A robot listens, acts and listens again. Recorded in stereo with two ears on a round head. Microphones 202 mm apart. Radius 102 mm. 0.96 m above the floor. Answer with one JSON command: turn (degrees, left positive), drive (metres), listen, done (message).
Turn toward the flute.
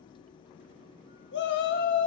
{"listen": true}
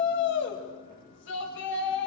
{"listen": true}
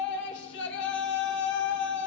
{"done": "I can't make out a flute to turn to."}